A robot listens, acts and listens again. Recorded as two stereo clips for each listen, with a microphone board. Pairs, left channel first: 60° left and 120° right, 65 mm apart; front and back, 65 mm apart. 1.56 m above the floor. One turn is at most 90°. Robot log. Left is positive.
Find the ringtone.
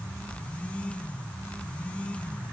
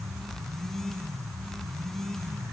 cmd idle
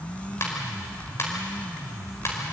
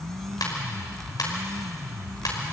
note: The ringtone: 15° left.
cmd yaw +15
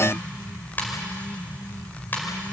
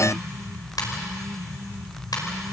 end: Facing the ringtone, over 4 m away.